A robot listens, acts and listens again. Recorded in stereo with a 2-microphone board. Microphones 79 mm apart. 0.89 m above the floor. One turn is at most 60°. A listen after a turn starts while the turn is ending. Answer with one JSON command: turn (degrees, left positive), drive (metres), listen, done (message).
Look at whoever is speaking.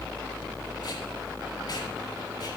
{"listen": true}
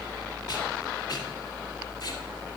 {"listen": true}
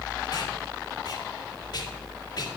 {"done": "I can't make out anyone speaking to turn to."}